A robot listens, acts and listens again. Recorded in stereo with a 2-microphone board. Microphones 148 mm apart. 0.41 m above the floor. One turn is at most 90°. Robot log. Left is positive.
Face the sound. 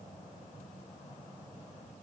cmd idle
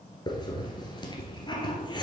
note: The hiss: about 30° left or 150° left.
cmd yaw +30
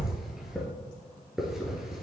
end: Facing the hiss, 1 to 2 m away.